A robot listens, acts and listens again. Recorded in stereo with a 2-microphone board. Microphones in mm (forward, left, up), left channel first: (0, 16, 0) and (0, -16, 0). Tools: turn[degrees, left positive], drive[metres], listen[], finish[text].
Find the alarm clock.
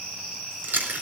Action: listen[]
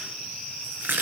Action: listen[]
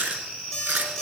Action: turn[30]
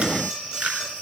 Thought: So it is at 20° right.
Action: turn[-20]
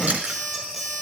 Action: finish[Facing the alarm clock, over 4 m away.]